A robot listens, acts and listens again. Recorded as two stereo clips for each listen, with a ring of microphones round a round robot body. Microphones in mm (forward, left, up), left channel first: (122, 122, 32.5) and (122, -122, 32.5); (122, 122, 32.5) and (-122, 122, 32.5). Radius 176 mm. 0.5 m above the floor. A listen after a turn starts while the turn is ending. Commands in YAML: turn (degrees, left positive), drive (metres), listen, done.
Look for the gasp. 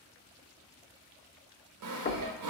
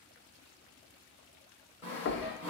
listen: true
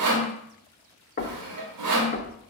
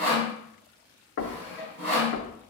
listen: true
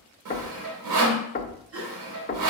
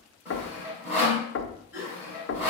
turn: -55
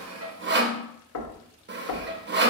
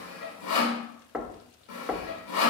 done: "Facing where the gasp came from. I can't hear it now."